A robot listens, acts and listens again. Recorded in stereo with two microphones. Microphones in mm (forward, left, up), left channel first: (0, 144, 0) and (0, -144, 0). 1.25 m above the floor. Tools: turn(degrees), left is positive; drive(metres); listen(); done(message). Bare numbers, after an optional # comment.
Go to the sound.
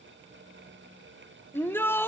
turn(30)
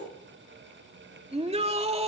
# So it is at 20° right.
turn(-20)
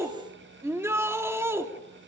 # The shout is now 10° right.
turn(-10)
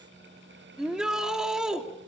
drive(1.0)
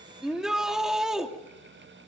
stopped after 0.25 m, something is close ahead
done("Something is in my way. I am facing the shout but have not reached it.")